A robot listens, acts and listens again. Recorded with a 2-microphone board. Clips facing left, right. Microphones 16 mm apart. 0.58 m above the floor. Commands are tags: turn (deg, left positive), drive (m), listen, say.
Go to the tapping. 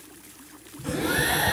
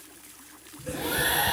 <turn deg="-30"/>
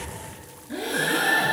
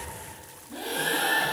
<listen/>
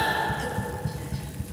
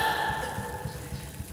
<turn deg="20"/>
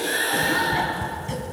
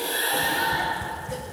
<drive m="1.0"/>
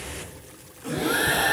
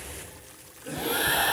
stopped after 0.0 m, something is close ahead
<listen/>
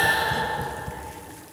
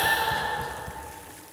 <say>Something is in my way. I am facing the tapping but have not reached it.</say>